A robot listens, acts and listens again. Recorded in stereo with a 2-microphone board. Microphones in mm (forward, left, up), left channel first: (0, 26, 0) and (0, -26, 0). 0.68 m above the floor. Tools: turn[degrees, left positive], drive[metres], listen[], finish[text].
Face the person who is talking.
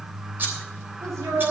Thought: The woman speaking: about 75° right or 105° right.
Action: turn[-75]
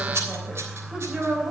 Thought: So it is at 20° right.
Action: turn[-20]
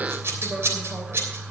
Action: listen[]
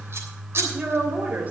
Thought: The woman speaking is now 30° right.
Action: turn[-30]
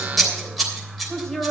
Thought: The woman speaking is now 15° left.
Action: turn[15]
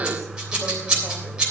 Action: listen[]
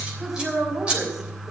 Action: finish[Facing the woman speaking.]